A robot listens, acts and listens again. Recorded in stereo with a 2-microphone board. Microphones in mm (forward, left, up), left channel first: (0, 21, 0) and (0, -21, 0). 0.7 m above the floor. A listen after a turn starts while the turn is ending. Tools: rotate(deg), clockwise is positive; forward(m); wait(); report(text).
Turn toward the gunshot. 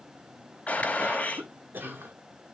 rotate(-35)
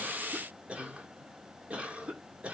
wait()
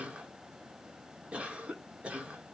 report("I heard a gunshot, but can't make it out now. It was about straight ahead or 110° left.")